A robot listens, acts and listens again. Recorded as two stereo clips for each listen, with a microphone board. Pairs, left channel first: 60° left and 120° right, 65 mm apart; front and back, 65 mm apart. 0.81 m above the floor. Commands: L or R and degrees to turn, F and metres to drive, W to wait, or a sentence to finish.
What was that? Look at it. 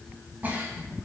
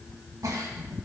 L180
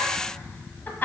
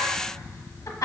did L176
Found it: a giggle, straight ahead, 1 to 2 m away.